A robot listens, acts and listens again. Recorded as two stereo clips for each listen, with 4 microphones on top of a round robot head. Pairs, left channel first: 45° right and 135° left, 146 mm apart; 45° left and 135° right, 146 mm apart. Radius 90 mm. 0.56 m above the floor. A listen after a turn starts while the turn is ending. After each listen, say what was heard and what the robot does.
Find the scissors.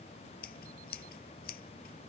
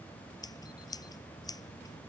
The scissors: 20° right. Turn 20° right.
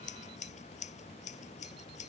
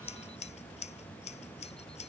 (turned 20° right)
Found it: scissors, straight ahead.